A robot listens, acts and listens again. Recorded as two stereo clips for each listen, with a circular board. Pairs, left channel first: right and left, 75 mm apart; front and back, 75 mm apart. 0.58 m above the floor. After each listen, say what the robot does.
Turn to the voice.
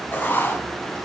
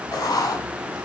Keep listening.
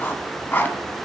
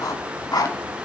Keep listening.
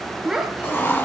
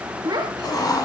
Turn 170° left.
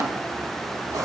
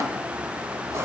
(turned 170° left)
Keep listening.
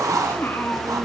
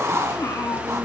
Turn 30° right.
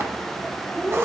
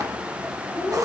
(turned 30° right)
Turn 15° right.
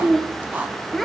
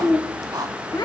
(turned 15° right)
Facing the child speaking, 1 to 2 m away.